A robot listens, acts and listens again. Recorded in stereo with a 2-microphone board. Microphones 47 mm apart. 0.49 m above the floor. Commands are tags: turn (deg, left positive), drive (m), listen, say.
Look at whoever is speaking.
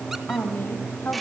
<turn deg="45"/>
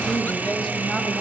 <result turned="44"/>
<listen/>
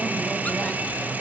<listen/>
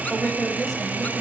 <say>Found it: a woman speaking, straight ahead.</say>